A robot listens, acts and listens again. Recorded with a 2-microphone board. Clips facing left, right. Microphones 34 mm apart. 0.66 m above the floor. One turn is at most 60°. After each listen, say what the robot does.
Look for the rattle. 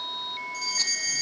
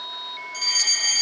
Keep listening.
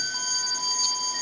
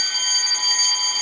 Keep listening.
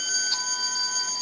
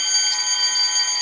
I can't make out a rattle to turn to.